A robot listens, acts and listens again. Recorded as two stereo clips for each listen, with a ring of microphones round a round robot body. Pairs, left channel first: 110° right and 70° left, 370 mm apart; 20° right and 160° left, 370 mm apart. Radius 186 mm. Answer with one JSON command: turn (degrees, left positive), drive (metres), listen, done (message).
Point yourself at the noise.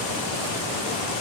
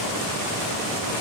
{"listen": true}
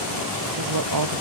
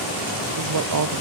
{"turn": 110}
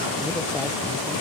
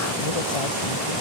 {"listen": true}
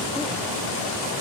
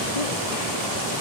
{"listen": true}
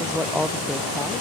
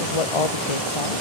{"turn": -20}
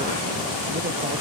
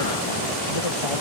{"listen": true}
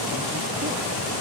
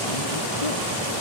{"listen": true}
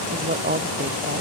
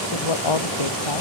{"done": "Facing the woman speaking."}